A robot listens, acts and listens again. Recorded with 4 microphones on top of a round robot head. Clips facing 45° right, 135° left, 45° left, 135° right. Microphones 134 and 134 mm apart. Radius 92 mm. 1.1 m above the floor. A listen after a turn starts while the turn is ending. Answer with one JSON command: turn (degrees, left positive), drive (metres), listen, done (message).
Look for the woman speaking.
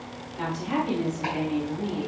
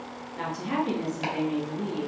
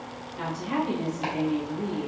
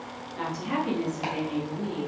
{"turn": -170}
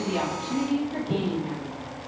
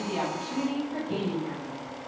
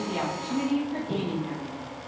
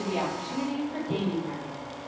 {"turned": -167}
{"turn": 15}
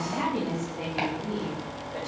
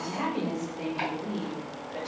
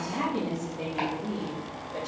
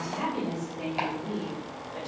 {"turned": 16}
{"turn": 15}
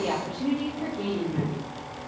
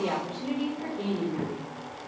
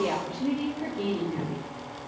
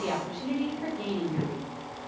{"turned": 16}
{"turn": 10}
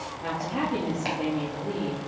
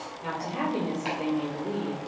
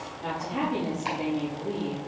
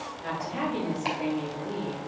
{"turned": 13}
{"done": "Found it: a woman speaking, straight ahead."}